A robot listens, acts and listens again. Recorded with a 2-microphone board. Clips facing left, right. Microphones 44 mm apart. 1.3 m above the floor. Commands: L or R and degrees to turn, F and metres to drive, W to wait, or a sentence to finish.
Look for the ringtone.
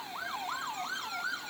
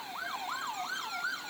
W
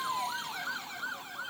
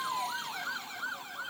W
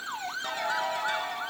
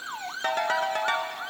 R55
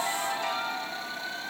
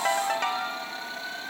R65
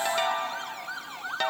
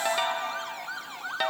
R10
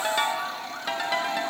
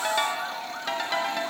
Found it: a ringtone, straight ahead.